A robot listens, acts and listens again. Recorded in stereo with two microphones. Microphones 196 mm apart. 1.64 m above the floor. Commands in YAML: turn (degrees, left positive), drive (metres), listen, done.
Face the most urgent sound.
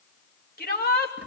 turn: 55
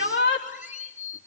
turn: 75
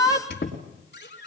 turn: 20
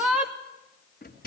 done: "Found it: a shout, straight ahead, 2 to 4 m away."